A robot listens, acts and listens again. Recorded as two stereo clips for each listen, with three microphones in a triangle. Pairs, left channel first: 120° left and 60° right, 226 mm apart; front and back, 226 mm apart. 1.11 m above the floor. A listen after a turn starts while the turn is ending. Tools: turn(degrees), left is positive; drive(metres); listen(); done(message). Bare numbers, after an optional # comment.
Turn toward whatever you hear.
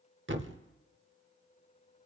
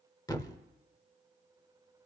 # The thud: 70° right.
turn(-70)
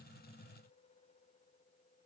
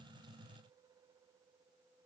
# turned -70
done("I heard a thud from this way, but can't make it out now.")